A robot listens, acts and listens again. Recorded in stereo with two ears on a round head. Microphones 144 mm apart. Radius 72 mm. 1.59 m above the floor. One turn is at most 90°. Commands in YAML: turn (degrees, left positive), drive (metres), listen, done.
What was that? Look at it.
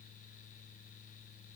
listen: true
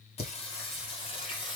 turn: 30
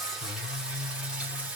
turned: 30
turn: -10
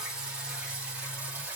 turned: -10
turn: -10
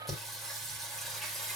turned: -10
done: "Found it: singing, straight ahead."